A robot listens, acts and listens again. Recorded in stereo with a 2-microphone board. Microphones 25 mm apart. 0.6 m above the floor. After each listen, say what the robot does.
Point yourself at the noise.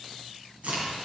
Turn 65° right.
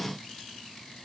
Keep listening.
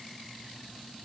I heard a crack, but can't make it out now. It was about straight ahead or 50° right.